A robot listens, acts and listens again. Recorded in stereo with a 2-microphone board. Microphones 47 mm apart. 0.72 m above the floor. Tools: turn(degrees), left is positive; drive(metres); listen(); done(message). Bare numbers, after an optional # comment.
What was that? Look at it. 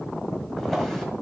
turn(30)
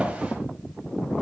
listen()
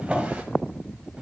# So it is at 20° right.
turn(-20)
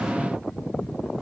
listen()
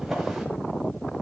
done("Found it: a drawer, straight ahead, 1 to 2 m away.")